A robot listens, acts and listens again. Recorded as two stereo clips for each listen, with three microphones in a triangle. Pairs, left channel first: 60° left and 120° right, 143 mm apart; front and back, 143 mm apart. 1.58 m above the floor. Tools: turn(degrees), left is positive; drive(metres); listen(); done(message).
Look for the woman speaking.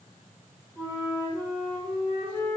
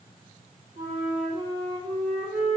listen()
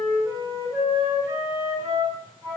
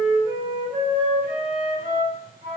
listen()
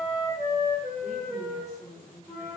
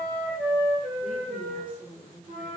turn(degrees=105)
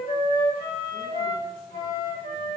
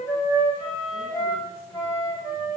listen()
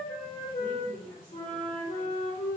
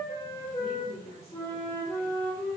done("Found it: a woman speaking, straight ahead, 1 to 2 m away.")